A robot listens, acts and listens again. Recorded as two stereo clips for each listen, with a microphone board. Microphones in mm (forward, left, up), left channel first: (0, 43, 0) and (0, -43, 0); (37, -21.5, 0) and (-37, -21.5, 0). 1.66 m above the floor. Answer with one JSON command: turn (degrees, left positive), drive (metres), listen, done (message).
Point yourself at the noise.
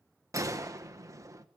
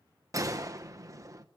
{"turn": -140}
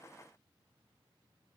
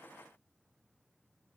{"done": "Facing where the gunshot came from. I can't hear it now."}